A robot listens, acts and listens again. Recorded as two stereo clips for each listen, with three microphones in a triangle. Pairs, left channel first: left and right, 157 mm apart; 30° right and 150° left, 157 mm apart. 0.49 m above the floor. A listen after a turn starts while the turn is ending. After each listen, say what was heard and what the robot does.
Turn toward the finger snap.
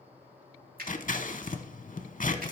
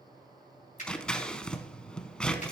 The finger snap: 70° right. Turn 70° right.
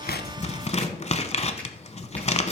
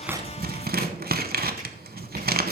Keep listening.
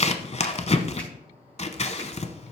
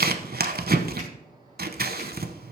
Keep listening.
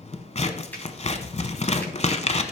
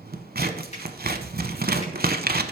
The finger snap is now 10° left. Turn 10° left.
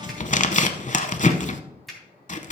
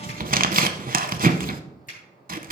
Found it: a finger snap, straight ahead, 2 to 4 m away.